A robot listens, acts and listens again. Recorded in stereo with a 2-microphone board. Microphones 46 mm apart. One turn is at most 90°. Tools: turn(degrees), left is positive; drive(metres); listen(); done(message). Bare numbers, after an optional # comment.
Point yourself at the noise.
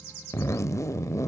turn(90)
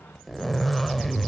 done("Found it: a zipper, straight ahead, under 1 m away.")